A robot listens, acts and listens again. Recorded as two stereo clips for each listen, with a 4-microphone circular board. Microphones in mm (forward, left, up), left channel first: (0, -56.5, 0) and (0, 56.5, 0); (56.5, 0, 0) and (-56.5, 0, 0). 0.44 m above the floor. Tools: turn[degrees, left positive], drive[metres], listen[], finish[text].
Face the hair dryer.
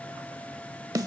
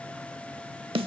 Action: listen[]
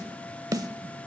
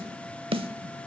Action: listen[]
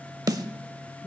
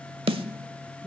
Action: finish[I can't make out a hair dryer, only a snare drum.]